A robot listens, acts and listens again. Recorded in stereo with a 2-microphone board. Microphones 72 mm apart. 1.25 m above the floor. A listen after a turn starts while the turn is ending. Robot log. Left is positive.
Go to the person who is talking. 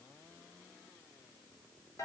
cmd idle
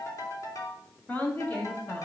note: The woman speaking: about 25° left or 155° left.
cmd yaw +25
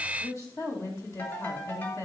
note: So it is at 130° left.
cmd yaw +130
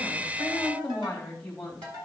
note: The woman speaking is now 10° left.
cmd yaw +10
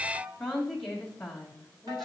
cmd fwd 1.0
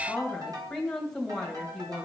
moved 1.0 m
cmd fwd 1.0
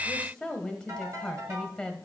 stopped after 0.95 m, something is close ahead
end: I am next to the woman speaking.